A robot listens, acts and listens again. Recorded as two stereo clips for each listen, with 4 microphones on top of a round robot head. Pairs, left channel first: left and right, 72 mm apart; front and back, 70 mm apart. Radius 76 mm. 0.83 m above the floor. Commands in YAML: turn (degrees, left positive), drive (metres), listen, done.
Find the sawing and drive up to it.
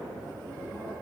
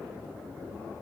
listen: true
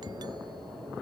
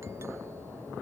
listen: true
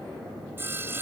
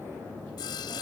turn: -30
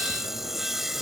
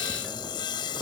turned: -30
drive: 1.0
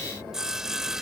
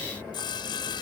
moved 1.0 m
drive: 1.0
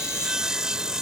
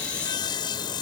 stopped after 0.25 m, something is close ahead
turn: -10
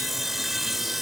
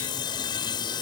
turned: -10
done: "Blocked. The sawing is further on, straight ahead."